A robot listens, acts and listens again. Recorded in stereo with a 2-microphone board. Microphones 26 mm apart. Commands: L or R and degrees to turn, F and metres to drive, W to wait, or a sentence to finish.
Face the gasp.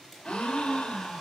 L45
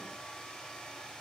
W
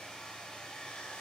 I heard a gasp, but can't make it out now. It was about straight ahead or 90° left.